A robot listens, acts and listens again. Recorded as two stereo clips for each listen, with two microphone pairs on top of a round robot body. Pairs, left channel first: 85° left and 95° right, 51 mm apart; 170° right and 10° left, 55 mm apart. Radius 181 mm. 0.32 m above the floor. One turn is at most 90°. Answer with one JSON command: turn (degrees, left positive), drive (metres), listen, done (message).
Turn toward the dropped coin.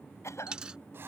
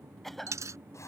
{"turn": -20}
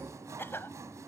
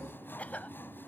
{"done": "Facing where the dropped coin came from. I can't hear it now."}